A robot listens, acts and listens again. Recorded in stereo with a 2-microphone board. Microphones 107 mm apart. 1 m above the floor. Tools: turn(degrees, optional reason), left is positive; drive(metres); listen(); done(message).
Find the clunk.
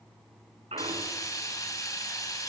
turn(degrees=-90)
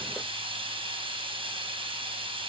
done("Facing where the clunk came from. I can't hear it now.")